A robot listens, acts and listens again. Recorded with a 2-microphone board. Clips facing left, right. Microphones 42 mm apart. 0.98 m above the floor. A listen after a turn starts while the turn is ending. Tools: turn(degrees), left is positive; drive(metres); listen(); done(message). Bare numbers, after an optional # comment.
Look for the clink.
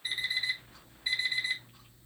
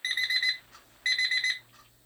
listen()
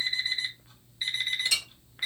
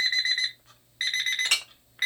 # The clink: about 50° right or 130° right.
turn(-50)
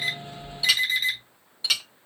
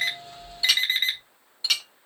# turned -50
done("Facing the clink, under 1 m away.")